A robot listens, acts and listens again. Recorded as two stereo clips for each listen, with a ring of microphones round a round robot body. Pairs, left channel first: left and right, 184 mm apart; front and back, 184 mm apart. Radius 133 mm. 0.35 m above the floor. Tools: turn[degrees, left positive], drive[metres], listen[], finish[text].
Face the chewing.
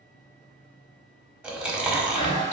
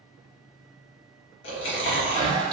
Action: finish[Found it: chewing, straight ahead, 1 to 2 m away.]